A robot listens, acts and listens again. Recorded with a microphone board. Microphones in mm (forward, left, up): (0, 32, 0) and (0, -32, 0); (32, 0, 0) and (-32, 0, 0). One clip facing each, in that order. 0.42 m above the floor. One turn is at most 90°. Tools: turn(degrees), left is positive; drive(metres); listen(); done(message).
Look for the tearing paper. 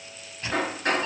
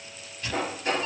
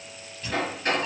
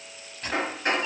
turn(degrees=90)
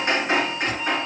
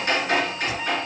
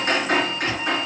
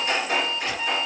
turn(degrees=60)
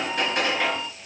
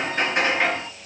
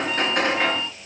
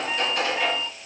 listen()
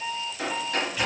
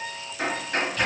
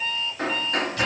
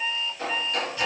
done("I heard tearing paper from this way, but can't make it out now.")